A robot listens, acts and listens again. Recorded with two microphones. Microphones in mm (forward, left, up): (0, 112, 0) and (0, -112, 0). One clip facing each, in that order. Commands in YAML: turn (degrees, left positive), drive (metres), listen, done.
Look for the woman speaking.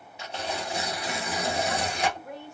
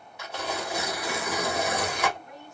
turn: 70
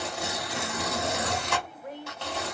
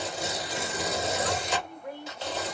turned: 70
turn: 20
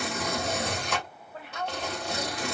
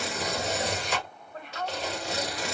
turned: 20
done: "Found it: a woman speaking, straight ahead."